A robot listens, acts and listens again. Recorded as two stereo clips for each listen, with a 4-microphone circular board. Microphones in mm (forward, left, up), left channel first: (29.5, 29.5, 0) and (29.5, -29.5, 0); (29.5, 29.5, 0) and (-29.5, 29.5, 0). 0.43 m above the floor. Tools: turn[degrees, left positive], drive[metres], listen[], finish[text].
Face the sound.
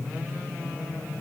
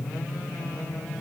Action: listen[]
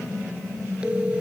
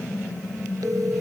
Thought: The phone ringing: 165° right.
Action: turn[-165]
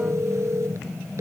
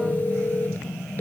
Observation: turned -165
Thought: The phone ringing is now 55° right.
Action: turn[-55]
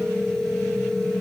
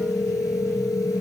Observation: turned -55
Thought: The phone ringing is now 10° left.
Action: turn[10]
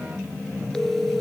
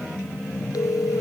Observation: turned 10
Action: finish[Found it: a phone ringing, straight ahead.]